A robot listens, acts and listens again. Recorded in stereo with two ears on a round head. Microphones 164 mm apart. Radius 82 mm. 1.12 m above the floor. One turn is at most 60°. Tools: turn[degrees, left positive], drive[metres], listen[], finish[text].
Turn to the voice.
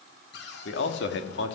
Thought: The man speaking: about 65° left or 115° left.
Action: turn[60]
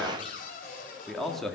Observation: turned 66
Action: finish[Facing the man speaking, 2 to 4 m away.]